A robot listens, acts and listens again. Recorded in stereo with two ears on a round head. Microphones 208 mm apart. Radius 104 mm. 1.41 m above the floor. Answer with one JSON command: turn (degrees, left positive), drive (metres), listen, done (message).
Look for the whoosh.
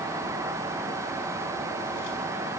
{"listen": true}
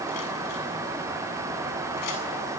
{"listen": true}
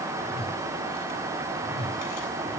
{"turn": 30}
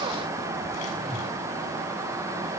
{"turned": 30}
{"done": "Found it: a whoosh, straight ahead, 2 to 4 m away."}